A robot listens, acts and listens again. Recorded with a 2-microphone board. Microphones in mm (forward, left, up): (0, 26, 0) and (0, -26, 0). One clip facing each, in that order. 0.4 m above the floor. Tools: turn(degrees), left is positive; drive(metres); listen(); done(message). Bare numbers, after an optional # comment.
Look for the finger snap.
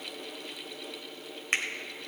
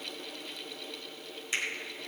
# The finger snap: about 55° left or 125° left.
turn(55)
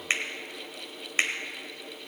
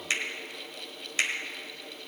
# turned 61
# So it is at 40° left.
turn(40)
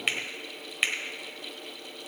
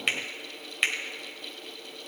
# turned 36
done("Found it: a finger snap, straight ahead.")